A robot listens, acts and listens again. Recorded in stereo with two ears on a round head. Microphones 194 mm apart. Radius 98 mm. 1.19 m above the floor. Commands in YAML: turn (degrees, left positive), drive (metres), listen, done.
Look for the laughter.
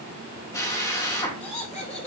turn: 35
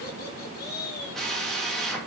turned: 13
turn: 55
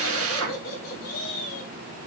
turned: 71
turn: 40
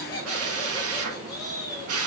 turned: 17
turn: 15
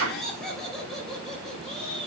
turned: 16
done: "Found it: laughter, straight ahead."